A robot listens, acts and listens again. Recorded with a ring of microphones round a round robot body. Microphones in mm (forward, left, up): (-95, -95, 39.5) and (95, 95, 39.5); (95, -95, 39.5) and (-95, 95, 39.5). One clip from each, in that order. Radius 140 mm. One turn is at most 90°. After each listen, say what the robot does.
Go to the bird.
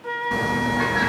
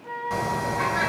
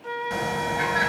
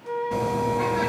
Turn 15° right.
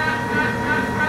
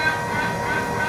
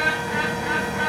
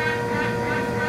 Drive 1.0 m forward.
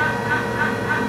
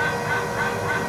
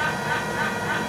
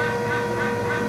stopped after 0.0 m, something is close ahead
Something is in my way. I am facing the bird but have not reached it.